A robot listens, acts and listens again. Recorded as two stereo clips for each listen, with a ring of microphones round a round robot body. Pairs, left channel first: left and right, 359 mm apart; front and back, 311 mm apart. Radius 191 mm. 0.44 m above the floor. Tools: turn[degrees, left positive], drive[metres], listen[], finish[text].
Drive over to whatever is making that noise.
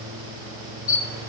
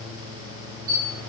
Thought: The camera shutter: 135° left.
Action: turn[135]
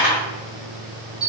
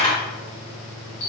Action: drive[1.0]
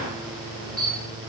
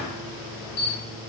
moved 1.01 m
Action: drive[1.0]
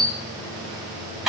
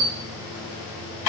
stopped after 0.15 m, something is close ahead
Action: finish[I am next to the camera shutter.]